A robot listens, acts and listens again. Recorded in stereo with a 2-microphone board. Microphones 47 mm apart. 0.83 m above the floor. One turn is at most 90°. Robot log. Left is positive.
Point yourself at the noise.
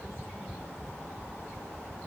cmd idle
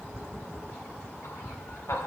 note: The laughter: about 65° left or 115° left.
cmd yaw +65
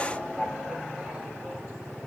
end: Found it: laughter, straight ahead, 2 to 4 m away.